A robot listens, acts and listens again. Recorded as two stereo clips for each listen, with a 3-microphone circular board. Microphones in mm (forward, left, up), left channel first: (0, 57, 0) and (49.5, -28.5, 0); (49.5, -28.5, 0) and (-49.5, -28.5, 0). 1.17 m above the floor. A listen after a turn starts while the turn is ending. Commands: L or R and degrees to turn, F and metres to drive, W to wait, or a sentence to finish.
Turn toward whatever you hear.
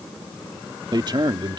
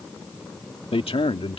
R15
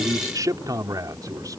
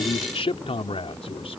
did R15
Found it: a man speaking, straight ahead.